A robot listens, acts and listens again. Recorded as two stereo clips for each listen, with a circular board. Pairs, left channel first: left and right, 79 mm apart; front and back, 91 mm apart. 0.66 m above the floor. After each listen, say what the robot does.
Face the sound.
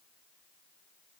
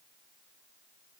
Keep listening.
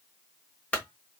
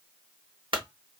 Turn 160° left.
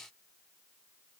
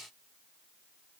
I heard a clunk from this way, but can't make it out now.